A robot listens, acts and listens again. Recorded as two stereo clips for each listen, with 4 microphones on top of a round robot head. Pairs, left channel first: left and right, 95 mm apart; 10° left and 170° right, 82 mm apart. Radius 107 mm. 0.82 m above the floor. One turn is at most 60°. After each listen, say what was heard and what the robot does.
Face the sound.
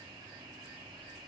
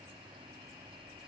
Keep listening.
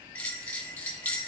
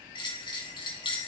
The bell: 20° left. Turn 20° left.
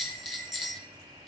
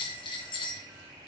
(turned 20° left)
Facing the bell, 1 to 2 m away.